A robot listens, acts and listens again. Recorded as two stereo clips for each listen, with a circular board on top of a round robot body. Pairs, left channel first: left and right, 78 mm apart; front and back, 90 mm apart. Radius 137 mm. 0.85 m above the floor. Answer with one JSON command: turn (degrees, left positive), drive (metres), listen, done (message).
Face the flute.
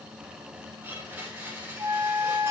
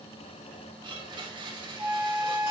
{"turn": -120}
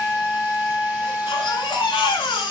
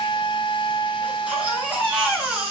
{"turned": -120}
{"turn": 15}
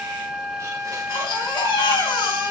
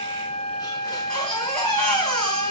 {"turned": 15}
{"done": "Facing the flute, 2 to 4 m away."}